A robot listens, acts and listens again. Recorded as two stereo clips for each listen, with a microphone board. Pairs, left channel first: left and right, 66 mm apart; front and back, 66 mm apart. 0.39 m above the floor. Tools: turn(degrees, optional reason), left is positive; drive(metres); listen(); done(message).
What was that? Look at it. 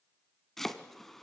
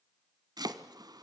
turn(degrees=175, reason="The chopping: 175° left.")
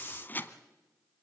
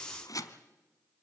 turn(degrees=30, reason="The chopping is now 30° left.")
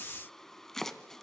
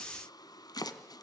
done("Found it: chopping, straight ahead.")